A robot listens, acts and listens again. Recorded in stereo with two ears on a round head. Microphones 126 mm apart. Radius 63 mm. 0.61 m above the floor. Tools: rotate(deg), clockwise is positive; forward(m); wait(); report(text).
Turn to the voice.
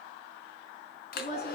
rotate(-50)
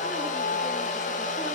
wait()
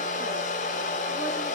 wait()
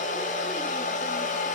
report("I heard a woman speaking, but can't make it out now. It was about straight ahead or 80° left.")